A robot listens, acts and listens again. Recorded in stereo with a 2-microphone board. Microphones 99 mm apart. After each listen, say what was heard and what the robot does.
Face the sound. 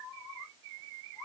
Keep listening.
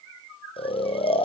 The snoring: about 70° left or 110° left. Turn 70° left.
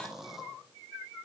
Facing the snoring, over 4 m away.